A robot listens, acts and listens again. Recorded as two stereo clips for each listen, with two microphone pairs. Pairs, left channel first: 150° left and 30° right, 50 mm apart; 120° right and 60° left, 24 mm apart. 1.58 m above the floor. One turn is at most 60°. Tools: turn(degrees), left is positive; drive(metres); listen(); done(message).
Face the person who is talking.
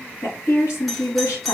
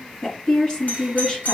turn(degrees=60)
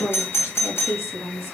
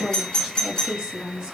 turn(degrees=60)
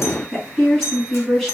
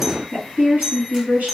turn(degrees=60)
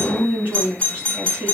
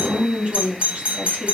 turn(degrees=25)
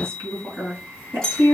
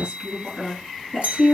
turn(degrees=10)
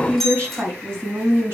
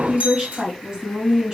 done("Found it: a woman speaking, straight ahead, 2 to 4 m away.")